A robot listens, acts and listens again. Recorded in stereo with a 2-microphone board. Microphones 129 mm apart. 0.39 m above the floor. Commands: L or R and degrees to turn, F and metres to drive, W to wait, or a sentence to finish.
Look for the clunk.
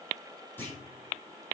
L15
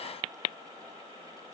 W
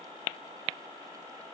I heard a clunk, but can't make it out now. It was about straight ahead or 150° left.